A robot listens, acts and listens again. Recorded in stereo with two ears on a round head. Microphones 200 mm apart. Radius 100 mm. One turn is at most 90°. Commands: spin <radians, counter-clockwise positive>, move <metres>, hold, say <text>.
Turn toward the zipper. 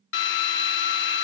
hold
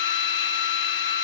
hold
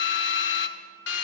say I can't make out a zipper to turn to.